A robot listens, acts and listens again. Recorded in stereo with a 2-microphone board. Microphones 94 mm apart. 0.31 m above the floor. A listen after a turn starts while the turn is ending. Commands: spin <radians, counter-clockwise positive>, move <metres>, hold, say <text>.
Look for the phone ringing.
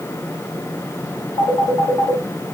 spin 1.22
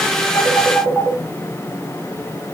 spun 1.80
say Found it: a phone ringing, straight ahead.